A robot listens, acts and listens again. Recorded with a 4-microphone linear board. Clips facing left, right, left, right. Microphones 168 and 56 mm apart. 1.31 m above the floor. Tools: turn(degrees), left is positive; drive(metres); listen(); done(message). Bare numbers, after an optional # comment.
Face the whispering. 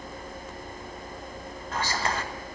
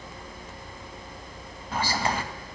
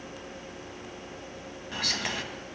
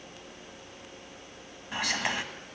turn(-30)
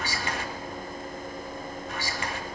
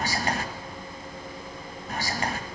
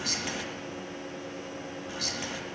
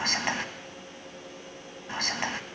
# So it is at 140° right.
turn(-140)
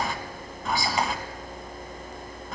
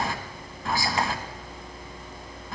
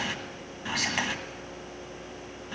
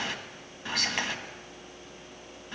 done("Facing the whispering, 1 to 2 m away.")